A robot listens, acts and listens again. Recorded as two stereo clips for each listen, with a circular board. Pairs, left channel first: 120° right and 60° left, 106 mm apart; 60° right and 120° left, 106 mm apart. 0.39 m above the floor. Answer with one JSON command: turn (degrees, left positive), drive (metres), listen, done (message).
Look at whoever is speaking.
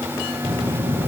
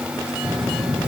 {"turn": 25}
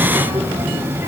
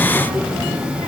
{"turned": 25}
{"done": "Facing the child speaking, over 4 m away."}